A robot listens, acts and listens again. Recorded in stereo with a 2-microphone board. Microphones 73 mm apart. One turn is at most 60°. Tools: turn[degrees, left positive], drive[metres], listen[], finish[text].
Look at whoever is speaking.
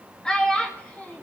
Thought: The child speaking: about 15° left or 165° left.
Action: turn[15]
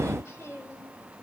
Action: listen[]
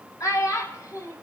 Thought: So it is at 120° left.
Action: turn[60]
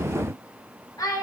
Thought: The child speaking is now 70° left.
Action: turn[60]
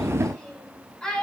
Thought: The child speaking is now 10° left.
Action: turn[10]
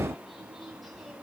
Action: listen[]
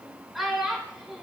Action: finish[Found it: a child speaking, straight ahead.]